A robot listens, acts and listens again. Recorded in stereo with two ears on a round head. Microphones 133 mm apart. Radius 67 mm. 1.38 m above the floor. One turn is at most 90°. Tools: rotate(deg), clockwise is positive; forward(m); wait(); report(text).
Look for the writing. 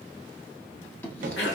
rotate(-30)
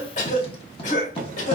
rotate(-90)
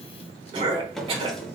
rotate(-45)
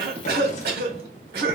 wait()
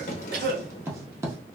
rotate(20)
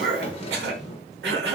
wait()
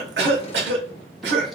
wait()
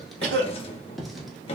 report("Facing the writing, 1 to 2 m away.")